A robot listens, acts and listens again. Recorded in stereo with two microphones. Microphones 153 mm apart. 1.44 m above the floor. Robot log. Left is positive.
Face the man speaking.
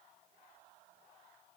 cmd idle
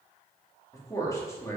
note: The man speaking: about 15° left or 165° left.
cmd yaw +15
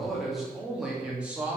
cmd yaw -30
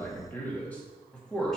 end: Found it: a man speaking, straight ahead, 2 to 4 m away.